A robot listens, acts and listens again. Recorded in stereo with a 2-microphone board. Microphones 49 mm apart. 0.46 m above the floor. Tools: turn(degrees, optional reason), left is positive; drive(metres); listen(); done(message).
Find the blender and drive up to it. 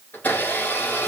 turn(degrees=40, reason="The blender: about 40° left or 140° left.")
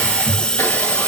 listen()
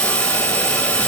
listen()
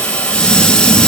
done("I heard a blender, but can't make it out now. It was about straight ahead or 100° left. I did not reach it.")